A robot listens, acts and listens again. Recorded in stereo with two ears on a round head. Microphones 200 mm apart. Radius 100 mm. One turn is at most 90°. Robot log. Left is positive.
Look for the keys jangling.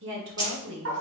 note: The keys jangling: about 20° right or 160° right.
cmd yaw -20
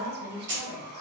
note: So it is at 125° right.
cmd yaw -90
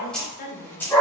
note: The keys jangling is now 10° left.
cmd yaw +10
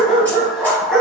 cmd idle
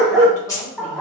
note: The keys jangling is now 15° left.
cmd yaw +15
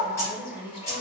note: The keys jangling is now 15° left.
cmd yaw +15
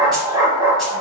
cmd idle
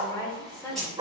end: Facing the keys jangling, 2 to 4 m away.